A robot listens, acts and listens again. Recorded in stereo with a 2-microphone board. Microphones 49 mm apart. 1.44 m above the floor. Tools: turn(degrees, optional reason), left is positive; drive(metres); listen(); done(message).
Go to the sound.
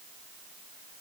listen()
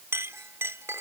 turn(degrees=-65, reason="The clink: about 65° right or 115° right.")
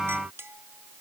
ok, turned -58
turn(degrees=-55, reason="So it is at 55° right.")
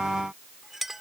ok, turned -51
drive(metres=1.0)
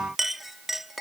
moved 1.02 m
drive(metres=1.0)
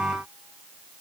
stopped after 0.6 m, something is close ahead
listen()
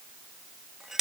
turn(degrees=-10, reason="The clink is now 10° right.")
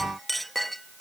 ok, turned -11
done("I am next to the clink.")